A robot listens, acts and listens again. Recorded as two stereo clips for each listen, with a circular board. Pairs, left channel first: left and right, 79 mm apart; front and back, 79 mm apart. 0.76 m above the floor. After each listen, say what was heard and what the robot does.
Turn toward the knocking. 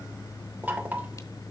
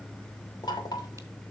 The knocking: 25° right. Turn 25° right.
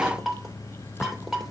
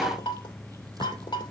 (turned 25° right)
Found it: knocking, straight ahead.